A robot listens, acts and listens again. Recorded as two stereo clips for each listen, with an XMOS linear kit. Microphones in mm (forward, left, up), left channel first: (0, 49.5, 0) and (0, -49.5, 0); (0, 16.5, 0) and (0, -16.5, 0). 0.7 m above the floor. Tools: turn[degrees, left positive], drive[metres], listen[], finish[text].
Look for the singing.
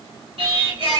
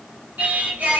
Thought: The singing: about 55° right or 125° right.
Action: turn[-55]
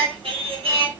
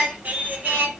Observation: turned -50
Thought: So it is at 70° right.
Action: turn[-70]
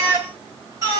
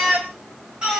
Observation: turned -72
Thought: The singing is now 35° right.
Action: turn[-35]
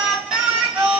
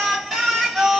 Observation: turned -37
Thought: The singing is now 15° right.
Action: turn[-15]
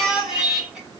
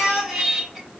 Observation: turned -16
Action: finish[Facing the singing.]